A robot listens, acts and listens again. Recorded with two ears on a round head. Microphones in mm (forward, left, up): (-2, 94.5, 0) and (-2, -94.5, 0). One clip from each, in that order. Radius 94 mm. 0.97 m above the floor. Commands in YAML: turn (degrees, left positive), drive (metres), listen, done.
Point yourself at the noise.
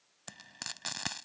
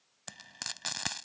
turn: -15
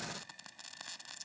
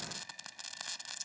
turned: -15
turn: -150
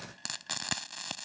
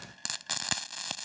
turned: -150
turn: -20
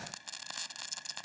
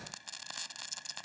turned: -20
done: "Facing the frying."